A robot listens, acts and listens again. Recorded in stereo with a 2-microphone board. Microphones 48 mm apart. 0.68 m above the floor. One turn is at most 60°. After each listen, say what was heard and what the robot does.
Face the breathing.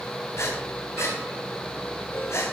The breathing: about 70° left or 110° left. Turn 60° left.
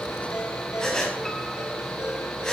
So it is at 15° left. Turn 15° left.
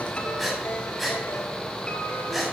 Found it: breathing, straight ahead, over 4 m away.